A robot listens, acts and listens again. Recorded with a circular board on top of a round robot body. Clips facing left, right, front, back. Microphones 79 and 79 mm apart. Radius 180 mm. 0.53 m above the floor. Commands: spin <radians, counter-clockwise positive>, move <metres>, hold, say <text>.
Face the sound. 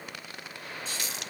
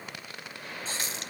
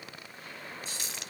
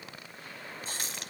spin -2.53
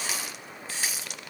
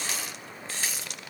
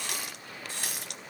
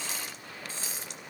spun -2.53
say Found it: a running tap, straight ahead.